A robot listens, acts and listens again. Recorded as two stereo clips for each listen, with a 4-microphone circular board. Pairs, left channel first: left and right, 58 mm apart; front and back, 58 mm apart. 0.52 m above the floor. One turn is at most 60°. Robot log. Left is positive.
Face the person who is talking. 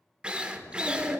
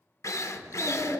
note: The child speaking: 140° left.
cmd yaw +60
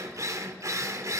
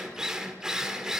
note: Nothing new. It was at 80° left.
cmd yaw +60
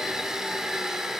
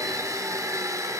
note: Nothing new. It was at 20° left.
cmd yaw +20
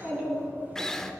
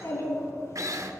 note: The child speaking is now 30° right.
cmd yaw -30
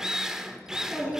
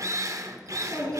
note: The child speaking is now 10° right.
cmd yaw -10
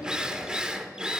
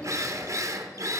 end: Found it: a child speaking, straight ahead, over 4 m away.